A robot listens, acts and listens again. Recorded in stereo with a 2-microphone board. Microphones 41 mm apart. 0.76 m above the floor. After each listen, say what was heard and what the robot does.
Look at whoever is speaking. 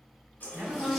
The woman speaking: about 65° right or 115° right. Turn 65° right.
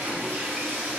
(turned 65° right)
Keep listening.
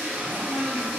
Keep listening.
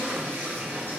I heard a woman speaking, but can't make it out now. It was about straight ahead or 50° right.